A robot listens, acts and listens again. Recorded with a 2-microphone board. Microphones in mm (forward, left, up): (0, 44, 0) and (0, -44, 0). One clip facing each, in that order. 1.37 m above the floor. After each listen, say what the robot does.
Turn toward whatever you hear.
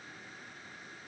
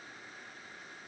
Keep listening.
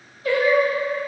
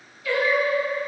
Turn 35° left.
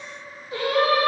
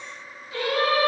Turn 30° left.
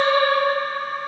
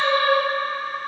Turn 25° left.
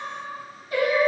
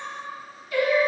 Turn 30° left.
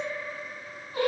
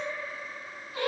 Turn 45° left.
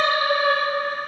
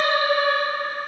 Turn 55° left.
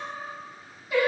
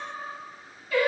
Turn 20° left.
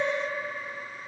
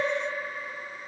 Facing the singing, 1 to 2 m away.